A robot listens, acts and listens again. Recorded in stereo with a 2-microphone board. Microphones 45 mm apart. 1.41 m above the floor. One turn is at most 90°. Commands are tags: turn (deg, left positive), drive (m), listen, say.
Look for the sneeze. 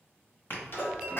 <turn deg="50"/>
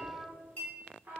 <listen/>
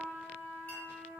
<say>I heard a sneeze, but can't make it out now. It was about straight ahead or 80° left.</say>